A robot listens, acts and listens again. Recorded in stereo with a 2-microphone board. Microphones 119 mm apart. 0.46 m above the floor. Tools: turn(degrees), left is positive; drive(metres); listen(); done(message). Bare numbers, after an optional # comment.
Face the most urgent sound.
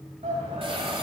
# The shout: about 70° right or 110° right.
turn(-70)
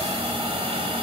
listen()
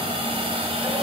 listen()
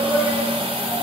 # So it is at 20° right.
turn(-20)
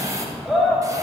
done("Facing the shout.")